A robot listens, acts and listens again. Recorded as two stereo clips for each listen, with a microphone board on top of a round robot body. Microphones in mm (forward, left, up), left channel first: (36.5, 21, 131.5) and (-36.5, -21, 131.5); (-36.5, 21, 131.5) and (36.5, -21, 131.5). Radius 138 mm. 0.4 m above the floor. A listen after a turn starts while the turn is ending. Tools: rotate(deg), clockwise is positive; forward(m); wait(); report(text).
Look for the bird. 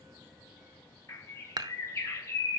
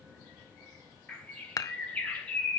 rotate(-80)
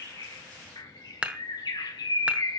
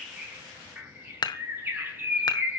rotate(-30)
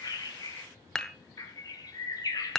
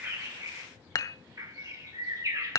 report("Found it: a bird, straight ahead, 2 to 4 m away.")